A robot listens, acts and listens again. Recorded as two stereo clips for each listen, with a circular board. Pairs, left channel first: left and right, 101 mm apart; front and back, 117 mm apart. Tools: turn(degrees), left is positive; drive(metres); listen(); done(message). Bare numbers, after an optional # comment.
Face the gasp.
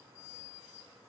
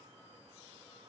listen()
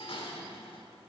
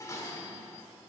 listen()
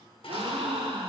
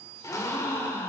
# The gasp: 65° right.
turn(-65)
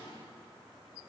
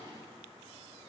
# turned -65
done("Facing where the gasp came from. I can't hear it now.")